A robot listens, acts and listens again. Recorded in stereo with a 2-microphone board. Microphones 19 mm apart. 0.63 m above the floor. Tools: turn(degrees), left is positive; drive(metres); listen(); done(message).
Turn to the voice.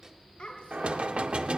turn(degrees=55)
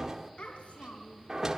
turn(degrees=70)
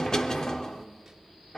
listen()
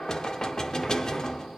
listen()
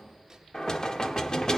done("Facing where the child speaking came from. I can't hear it now.")